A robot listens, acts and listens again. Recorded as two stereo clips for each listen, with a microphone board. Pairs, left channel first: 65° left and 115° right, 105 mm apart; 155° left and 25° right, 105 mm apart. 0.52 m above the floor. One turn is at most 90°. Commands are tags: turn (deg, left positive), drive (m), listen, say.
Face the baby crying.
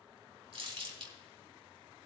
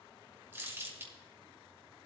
<listen/>
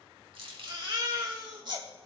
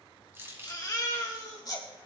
<turn deg="-90"/>
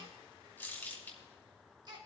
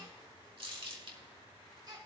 <turn deg="-65"/>
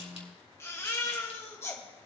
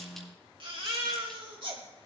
<say>Found it: a baby crying, straight ahead, 1 to 2 m away.</say>